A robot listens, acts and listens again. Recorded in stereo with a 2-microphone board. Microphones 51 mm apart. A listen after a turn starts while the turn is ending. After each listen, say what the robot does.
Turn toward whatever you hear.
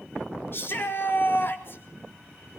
Turn 50° left.
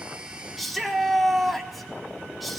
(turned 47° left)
Facing the shout, 2 to 4 m away.